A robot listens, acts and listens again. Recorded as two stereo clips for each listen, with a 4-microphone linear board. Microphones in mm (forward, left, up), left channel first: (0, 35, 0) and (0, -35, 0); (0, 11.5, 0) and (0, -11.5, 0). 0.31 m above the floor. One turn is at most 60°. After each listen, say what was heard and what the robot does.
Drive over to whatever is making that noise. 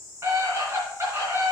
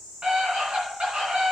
The scream: about 40° right or 140° right. Turn 40° right.
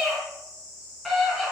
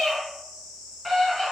Drive 1.0 m forward.
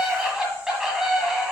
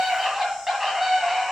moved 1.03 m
The scream is now 10° right. Turn 10° right.
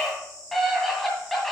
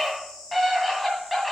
Drive 1.0 m forward.
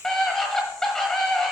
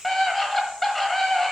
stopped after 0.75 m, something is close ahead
The scream is now 10° left. Turn 10° left.
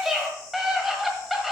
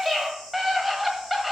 Arrived at the scream, straight ahead.